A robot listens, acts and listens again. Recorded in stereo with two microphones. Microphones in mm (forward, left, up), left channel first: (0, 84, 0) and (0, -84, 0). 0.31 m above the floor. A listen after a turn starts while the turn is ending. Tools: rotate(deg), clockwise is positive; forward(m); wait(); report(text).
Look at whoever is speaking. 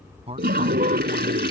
rotate(35)
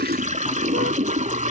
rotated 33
wait()
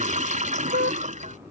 wait()
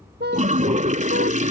report("I heard a man speaking, but can't make it out now. It was about 5° right or 110° right.")